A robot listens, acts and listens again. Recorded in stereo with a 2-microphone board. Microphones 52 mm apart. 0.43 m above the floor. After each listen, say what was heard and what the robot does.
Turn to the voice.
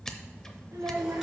Turn 90° right.
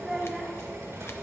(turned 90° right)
Found it: a child speaking, straight ahead.